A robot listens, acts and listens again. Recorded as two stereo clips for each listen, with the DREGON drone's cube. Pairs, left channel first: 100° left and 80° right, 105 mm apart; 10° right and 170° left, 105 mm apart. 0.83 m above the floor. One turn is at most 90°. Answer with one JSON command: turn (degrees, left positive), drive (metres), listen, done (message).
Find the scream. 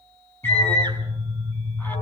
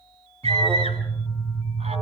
{"turn": 90}
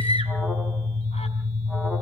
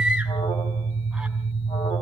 {"turn": 75}
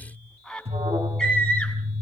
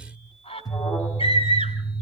{"turn": 10}
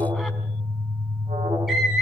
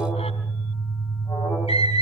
{"done": "Found it: a scream, straight ahead, over 4 m away."}